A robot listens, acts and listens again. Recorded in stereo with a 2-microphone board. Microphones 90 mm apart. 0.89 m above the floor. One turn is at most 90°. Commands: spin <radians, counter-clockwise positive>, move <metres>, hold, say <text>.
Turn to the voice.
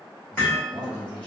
spin -0.96
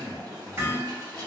spin -0.96
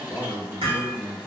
say Facing the man speaking.